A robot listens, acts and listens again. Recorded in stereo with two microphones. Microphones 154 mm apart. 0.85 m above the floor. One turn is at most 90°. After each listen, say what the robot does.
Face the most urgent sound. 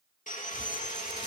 Keep listening.
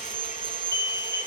Turn 20° left.
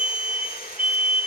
Turn 90° left.
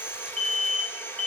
Turn 55° left.
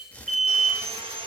Facing the alarm, over 4 m away.